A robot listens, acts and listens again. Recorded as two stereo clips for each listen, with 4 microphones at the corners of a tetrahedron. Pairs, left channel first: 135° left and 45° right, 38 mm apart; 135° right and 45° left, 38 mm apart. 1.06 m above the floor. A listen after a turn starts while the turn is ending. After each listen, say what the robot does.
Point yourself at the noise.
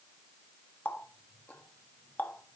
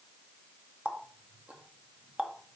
Turn 95° left.
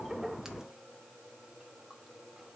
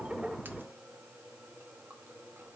Keep listening.
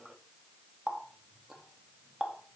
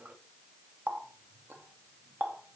Turn 30° left.
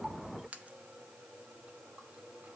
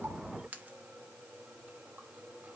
Found it: a running tap, straight ahead.